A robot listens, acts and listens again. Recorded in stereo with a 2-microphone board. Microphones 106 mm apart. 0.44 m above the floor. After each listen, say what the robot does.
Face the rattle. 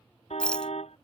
Turn 30° left.
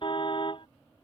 Keep listening.
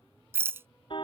Turn 25° right.
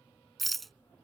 Facing the rattle.